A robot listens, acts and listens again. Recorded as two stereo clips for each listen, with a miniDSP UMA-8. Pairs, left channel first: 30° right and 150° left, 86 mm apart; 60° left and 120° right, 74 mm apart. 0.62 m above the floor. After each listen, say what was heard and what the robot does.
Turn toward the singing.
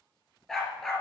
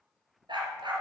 Keep listening.
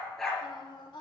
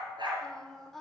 The singing: 25° right. Turn 25° right.
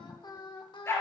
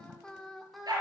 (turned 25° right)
The singing is now 30° right. Turn 30° right.
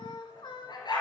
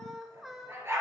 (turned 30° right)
The singing is now 35° right. Turn 35° right.
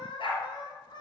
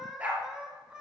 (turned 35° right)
The singing is now 45° right. Turn 45° right.
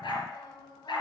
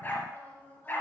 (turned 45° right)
Found it: singing, straight ahead.